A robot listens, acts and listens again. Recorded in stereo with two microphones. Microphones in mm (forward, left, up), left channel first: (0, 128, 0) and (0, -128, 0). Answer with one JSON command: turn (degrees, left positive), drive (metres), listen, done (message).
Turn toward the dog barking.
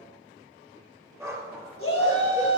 {"turn": -30}
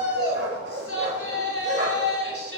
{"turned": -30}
{"turn": -135}
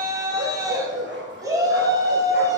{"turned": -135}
{"turn": -45}
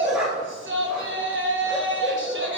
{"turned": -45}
{"done": "Facing the dog barking."}